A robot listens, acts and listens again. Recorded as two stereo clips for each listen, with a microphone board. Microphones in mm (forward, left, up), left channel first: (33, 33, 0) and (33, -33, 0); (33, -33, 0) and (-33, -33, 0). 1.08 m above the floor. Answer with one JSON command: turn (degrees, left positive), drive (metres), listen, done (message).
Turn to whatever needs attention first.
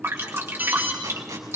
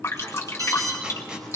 {"turn": -155}
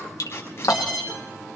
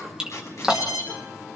{"turn": -10}
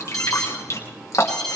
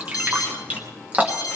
{"done": "Found it: an alarm, straight ahead, over 4 m away."}